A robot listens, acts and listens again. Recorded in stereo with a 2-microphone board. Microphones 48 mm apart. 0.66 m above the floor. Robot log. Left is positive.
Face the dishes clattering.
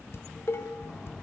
note: The dishes clattering: about 55° left or 125° left.
cmd yaw +55
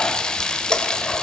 cmd idle
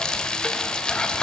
cmd idle
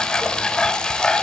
end: I heard dishes clattering, but can't make it out now. It was about straight ahead or 70° left.